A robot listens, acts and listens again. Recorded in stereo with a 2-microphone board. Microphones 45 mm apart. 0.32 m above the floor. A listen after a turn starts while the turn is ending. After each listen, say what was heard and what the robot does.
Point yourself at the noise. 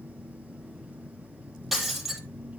Turn 30° right.
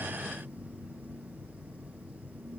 Keep listening.
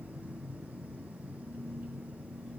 I heard breaking glass, but can't make it out now. It was about 25° left or 145° right.